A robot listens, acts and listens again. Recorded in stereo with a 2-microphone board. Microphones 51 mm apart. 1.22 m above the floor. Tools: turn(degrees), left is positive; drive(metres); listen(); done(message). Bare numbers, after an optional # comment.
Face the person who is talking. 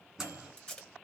listen()
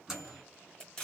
listen()
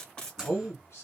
# The man speaking: about 55° left or 125° left.
turn(55)
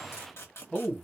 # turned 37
# So it is at 15° left.
turn(15)
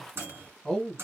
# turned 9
done("Facing the man speaking.")